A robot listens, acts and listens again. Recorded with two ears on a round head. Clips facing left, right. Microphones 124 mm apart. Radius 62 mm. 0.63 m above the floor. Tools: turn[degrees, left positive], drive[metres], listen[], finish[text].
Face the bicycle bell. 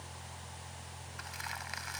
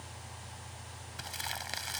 Action: listen[]
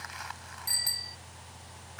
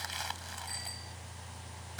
Action: turn[90]
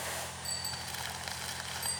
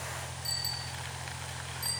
Action: finish[Facing the bicycle bell.]